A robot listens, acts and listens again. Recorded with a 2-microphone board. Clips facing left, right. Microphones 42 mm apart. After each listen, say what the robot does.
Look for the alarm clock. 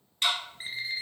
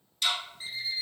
Turn 60° left.
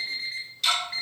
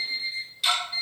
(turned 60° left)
Turn 65° left.
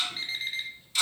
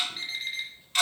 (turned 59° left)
Facing the alarm clock.